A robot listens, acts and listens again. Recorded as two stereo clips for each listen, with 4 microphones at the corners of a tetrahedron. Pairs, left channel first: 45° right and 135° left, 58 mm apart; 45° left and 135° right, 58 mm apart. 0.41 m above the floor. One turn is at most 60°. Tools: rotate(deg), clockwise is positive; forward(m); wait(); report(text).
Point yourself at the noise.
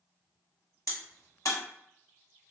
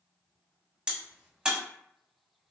rotate(60)
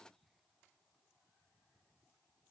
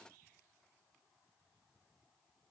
report("I heard a crack from this way, but can't make it out now.")